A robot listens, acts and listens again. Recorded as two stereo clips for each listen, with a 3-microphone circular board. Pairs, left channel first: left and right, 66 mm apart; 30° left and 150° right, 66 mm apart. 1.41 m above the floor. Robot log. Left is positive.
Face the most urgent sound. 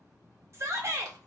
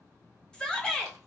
note: The shout: 50° right.
cmd yaw -50
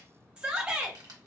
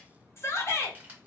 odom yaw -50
note: The shout is now 15° right.
cmd yaw -15
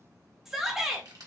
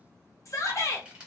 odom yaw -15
end: Found it: a shout, straight ahead.